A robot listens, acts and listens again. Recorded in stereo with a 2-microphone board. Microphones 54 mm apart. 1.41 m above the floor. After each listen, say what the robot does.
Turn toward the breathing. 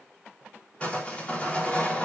Keep listening.
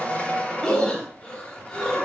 Turn 20° left.
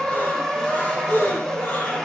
Turn 140° left.
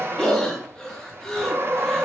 Turn 15° left.
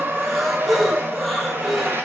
Found it: breathing, straight ahead.